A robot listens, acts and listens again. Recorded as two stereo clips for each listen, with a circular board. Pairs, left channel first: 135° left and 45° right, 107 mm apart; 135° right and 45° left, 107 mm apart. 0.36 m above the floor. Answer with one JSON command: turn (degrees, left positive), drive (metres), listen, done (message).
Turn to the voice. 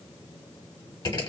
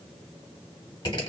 {"listen": true}
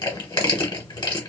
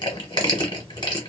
{"listen": true}
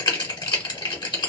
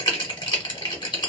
{"done": "I can't make out anyone speaking, only crushing."}